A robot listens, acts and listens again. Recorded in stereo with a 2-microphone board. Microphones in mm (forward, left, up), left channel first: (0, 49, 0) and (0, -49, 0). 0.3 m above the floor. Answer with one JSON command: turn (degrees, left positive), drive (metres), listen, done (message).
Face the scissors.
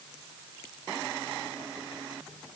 {"listen": true}
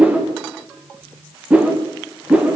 {"listen": true}
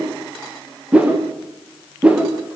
{"done": "I can't make out scissors, only a whoosh."}